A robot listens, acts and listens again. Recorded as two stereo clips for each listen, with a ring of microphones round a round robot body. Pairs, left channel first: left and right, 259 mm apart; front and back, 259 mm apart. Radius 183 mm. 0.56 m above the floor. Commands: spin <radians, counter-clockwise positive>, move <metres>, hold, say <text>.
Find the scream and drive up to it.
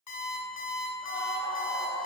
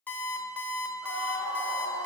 move 1.0
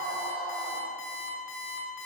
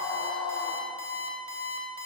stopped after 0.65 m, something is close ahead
say I am next to the scream.